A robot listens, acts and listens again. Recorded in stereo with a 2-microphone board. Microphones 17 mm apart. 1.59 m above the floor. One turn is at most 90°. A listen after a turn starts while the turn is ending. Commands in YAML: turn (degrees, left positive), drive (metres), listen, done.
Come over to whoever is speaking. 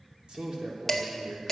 turn: -90
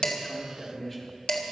turn: 15
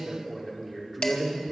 drive: 1.0
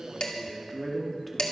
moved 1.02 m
drive: 1.0
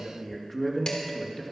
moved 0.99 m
drive: 1.0
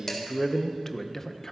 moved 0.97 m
turn: 20
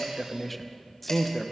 drive: 1.0
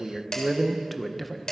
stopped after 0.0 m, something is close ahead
done: "I am next to the man speaking."